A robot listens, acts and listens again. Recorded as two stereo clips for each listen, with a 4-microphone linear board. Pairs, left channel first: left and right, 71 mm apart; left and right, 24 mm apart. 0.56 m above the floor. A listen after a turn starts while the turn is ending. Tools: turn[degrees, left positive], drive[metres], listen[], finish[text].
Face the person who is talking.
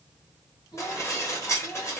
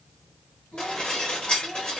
Action: turn[90]
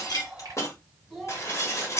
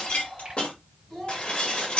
Action: finish[Found it: a child speaking, straight ahead, 2 to 4 m away.]